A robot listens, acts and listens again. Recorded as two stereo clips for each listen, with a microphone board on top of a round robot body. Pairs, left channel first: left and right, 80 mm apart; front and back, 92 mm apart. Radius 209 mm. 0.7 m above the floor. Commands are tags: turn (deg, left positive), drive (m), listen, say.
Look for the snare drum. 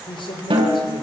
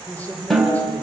<turn deg="-90"/>
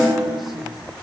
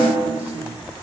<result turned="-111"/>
<turn deg="20"/>
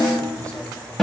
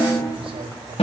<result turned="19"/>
<say>Found it: a snare drum, straight ahead, over 4 m away.</say>